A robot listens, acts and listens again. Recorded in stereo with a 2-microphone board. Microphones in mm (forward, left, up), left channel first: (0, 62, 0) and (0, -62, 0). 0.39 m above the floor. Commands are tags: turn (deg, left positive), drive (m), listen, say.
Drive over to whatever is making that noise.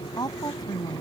<turn deg="35"/>
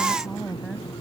<drive m="1.0"/>
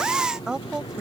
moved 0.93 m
<turn deg="-10"/>
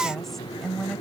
<drive m="1.0"/>
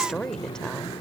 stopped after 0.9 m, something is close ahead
<turn deg="10"/>
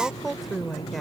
<say>Arrived at the woman speaking, straight ahead.</say>